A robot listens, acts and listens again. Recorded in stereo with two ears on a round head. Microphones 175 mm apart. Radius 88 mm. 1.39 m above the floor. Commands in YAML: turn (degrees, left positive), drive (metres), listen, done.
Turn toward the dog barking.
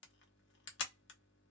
listen: true
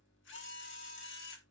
listen: true
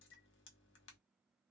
done: "I can't make out a dog barking to turn to."